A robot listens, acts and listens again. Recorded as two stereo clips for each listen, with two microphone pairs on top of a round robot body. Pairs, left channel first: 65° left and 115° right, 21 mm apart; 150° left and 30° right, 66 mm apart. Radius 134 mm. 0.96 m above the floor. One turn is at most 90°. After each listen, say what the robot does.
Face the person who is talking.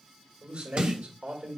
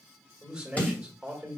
Turn 90° right.
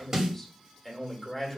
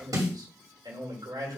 Turn 20° right.
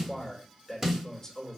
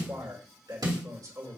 Facing the man speaking, 2 to 4 m away.